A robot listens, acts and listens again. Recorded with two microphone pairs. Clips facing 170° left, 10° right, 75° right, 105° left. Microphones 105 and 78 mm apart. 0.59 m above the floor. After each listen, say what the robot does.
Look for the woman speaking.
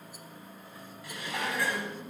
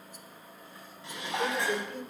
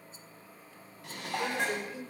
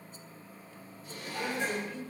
Facing the woman speaking.